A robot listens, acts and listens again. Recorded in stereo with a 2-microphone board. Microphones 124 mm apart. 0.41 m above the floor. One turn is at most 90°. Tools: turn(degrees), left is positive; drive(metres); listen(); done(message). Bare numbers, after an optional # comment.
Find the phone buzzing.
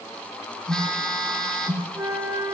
turn(30)
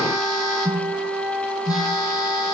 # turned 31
# So it is at 145° left.
turn(90)
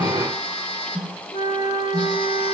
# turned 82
# The phone buzzing is now 60° left.
turn(60)
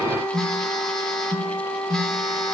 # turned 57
done("Facing the phone buzzing, 1 to 2 m away.")